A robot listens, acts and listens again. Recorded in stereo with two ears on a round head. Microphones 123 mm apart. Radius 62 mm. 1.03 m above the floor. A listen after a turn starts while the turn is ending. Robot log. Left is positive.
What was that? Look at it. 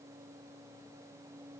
cmd idle
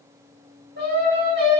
cmd yaw -90
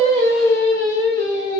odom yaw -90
note: So it is at 30° left.
cmd yaw +30
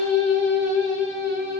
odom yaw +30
note: The singing is now 25° left.
cmd yaw +25
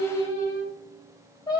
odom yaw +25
note: The singing is now 25° left.
cmd yaw +25
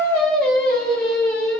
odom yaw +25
end: Found it: singing, straight ahead.